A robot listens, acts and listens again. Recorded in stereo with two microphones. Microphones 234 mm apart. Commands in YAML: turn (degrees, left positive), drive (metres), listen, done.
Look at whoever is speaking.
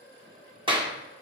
listen: true
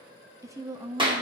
turn: -30
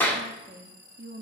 turn: -135
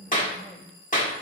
done: "Facing the woman speaking, under 1 m away."